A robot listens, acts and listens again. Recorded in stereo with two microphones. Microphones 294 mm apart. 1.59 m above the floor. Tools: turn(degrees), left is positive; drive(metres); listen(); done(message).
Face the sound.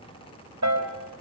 turn(degrees=-70)
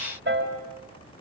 turn(degrees=-40)
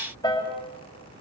turn(degrees=15)
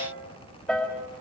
done("Found it: a piano, straight ahead, over 4 m away.")